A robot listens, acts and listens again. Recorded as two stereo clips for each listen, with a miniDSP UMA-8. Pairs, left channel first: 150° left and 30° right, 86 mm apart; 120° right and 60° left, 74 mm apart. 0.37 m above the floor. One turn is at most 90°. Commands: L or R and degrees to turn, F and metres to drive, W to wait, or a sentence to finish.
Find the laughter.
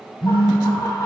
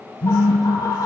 R90
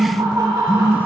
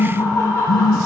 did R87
R70
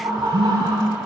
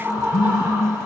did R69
Found it: laughter, straight ahead.